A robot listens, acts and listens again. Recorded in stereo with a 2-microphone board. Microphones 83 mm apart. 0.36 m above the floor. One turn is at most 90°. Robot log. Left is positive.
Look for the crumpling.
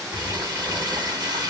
note: The crumpling: about 55° right or 125° right.
cmd yaw -55
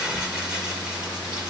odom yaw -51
note: So it is at 10° right.
cmd yaw -10
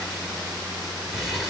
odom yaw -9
end: Found it: crumpling, straight ahead.